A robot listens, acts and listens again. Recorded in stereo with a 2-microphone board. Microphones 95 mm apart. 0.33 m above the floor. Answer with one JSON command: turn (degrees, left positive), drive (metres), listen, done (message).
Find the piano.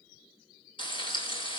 {"listen": true}
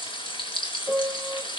{"turn": -30}
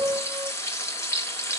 {"turn": -145}
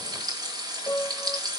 {"turn": 20}
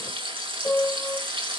{"done": "Facing the piano, 1 to 2 m away."}